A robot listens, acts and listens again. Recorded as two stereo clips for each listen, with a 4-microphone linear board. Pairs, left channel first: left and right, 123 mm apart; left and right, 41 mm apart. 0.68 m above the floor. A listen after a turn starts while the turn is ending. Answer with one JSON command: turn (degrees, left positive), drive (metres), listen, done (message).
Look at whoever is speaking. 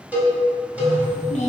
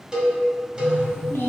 {"turn": 75}
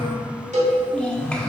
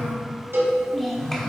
{"turn": 10}
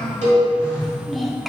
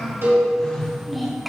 {"done": "Found it: a child speaking, straight ahead, 1 to 2 m away."}